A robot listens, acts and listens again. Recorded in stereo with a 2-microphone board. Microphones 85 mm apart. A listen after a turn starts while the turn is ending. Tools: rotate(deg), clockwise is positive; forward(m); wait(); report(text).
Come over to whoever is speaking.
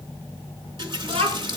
rotate(90)
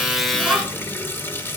wait()
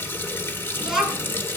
forward(1.0)
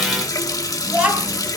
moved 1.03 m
rotate(15)
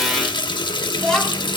forward(1.0)
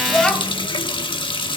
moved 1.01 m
rotate(-10)
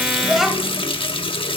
forward(1.0)
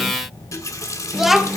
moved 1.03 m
forward(1.0)
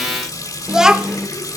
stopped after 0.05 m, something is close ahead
report("I am next to the child speaking.")